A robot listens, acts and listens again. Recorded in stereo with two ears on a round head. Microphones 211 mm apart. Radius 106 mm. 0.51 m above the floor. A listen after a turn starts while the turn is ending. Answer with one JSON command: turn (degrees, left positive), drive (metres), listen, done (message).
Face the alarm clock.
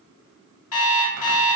{"turn": 65}
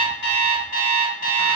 {"turn": 40}
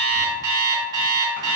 {"turn": -20}
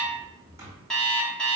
{"done": "Facing the alarm clock, 1 to 2 m away."}